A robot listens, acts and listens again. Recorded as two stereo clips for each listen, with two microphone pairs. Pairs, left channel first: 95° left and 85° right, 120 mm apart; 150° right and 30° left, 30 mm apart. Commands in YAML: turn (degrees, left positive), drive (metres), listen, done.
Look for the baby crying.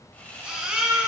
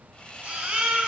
done: "Facing the baby crying."